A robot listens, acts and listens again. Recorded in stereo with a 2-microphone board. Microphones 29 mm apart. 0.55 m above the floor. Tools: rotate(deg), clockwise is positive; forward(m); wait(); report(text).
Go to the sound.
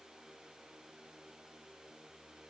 wait()
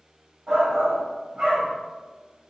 rotate(30)
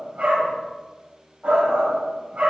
rotate(120)
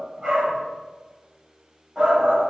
rotate(25)
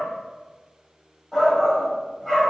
forward(1.0)
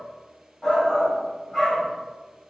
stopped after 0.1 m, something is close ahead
rotate(-10)
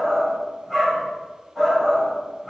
report("Something is in my way. I am facing the shout but have not reached it.")